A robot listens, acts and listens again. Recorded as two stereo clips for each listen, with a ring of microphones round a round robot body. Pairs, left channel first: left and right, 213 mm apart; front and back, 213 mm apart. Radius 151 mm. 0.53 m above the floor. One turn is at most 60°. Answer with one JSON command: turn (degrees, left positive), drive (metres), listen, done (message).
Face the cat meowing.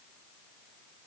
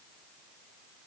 {"listen": true}
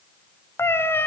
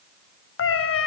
{"turn": 10}
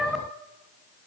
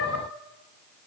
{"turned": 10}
{"done": "Facing the cat meowing, 2 to 4 m away."}